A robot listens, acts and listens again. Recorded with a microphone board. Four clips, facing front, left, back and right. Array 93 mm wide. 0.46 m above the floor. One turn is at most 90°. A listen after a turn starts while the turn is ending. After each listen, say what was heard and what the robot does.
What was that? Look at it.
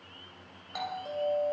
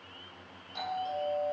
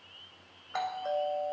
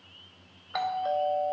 The doorbell: 115° right. Turn 90° right.
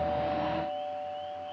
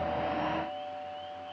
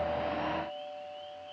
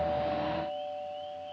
The doorbell is now 55° right. Turn 55° right.
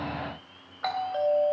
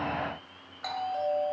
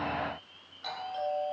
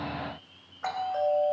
The doorbell is now 25° right. Turn 25° right.
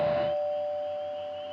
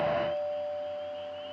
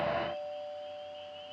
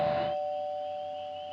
Facing the doorbell, 2 to 4 m away.